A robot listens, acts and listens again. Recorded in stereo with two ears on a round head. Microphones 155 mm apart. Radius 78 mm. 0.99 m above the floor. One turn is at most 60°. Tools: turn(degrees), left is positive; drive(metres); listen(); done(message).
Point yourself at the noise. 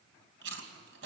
turn(degrees=-60)
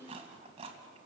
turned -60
turn(degrees=-35)
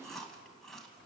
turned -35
done("Facing the chewing, 2 to 4 m away.")